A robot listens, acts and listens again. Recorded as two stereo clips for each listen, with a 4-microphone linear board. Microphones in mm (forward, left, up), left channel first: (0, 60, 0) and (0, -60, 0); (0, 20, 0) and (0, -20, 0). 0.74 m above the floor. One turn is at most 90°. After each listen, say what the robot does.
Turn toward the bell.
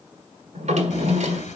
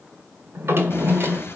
Turn 75° left.
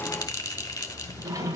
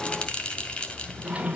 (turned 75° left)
Turn 30° left.
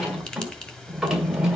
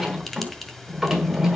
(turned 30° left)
Turn 10° left.
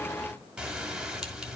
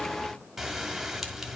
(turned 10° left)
Found it: a bell, straight ahead.